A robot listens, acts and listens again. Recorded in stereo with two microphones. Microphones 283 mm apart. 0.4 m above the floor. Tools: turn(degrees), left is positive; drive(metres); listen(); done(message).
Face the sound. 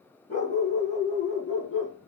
turn(degrees=55)
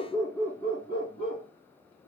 turn(degrees=25)
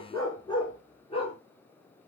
turn(degrees=20)
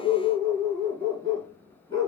turn(degrees=20)
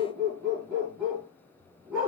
done("Facing the dog barking, 2 to 4 m away.")